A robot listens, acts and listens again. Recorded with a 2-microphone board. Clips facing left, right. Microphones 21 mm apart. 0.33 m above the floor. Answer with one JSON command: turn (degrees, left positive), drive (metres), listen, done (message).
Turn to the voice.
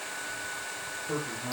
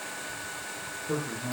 {"turn": 30}
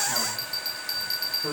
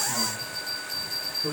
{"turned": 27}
{"turn": 155}
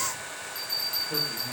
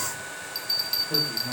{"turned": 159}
{"listen": true}
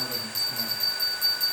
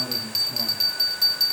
{"listen": true}
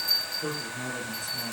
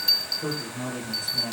{"done": "Found it: a man speaking, straight ahead, over 4 m away."}